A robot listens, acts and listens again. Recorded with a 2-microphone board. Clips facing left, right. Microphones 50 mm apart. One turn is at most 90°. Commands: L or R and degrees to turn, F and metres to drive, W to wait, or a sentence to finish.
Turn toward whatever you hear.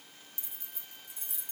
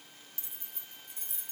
R40
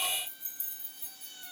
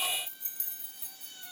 R90
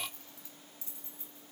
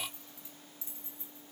R25
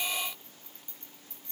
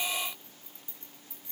R15
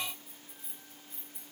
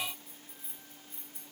Facing the keys jangling, 2 to 4 m away.